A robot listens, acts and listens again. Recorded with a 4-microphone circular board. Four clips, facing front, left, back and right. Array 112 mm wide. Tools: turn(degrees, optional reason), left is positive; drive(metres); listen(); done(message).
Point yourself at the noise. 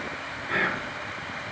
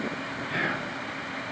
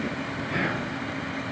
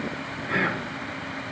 turn(degrees=-55, reason="The whispering: 55° right.")
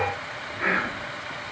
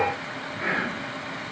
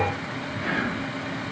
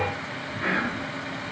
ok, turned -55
done("Facing the whispering, 2 to 4 m away.")